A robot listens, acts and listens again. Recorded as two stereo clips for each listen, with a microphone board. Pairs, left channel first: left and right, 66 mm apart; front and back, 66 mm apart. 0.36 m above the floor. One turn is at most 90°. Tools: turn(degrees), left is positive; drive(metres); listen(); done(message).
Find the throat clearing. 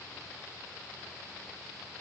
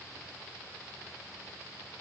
listen()
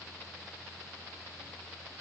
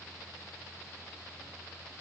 listen()
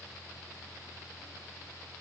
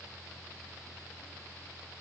done("I can't make out throat clearing to turn to.")